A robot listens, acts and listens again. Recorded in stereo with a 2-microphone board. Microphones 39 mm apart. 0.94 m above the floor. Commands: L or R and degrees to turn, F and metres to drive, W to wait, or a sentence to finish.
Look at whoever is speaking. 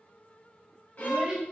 R15
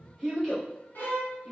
Facing the child speaking.